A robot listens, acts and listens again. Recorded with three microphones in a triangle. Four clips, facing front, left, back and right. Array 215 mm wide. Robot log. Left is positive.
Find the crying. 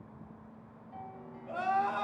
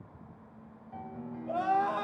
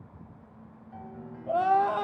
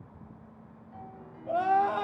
note: The crying: 150° right.
cmd yaw -150
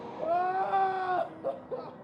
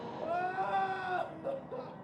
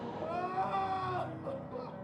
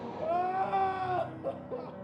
note: The crying is now 20° right.
cmd yaw -20
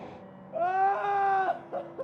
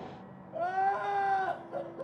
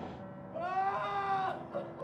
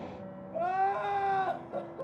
end: Facing the crying, 1 to 2 m away.